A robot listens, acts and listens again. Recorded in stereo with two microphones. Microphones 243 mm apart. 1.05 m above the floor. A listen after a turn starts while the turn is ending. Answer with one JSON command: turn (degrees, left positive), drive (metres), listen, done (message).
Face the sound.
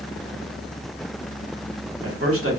{"turn": -65}
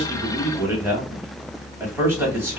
{"turn": -10}
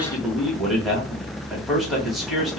{"done": "Facing the man speaking, 1 to 2 m away."}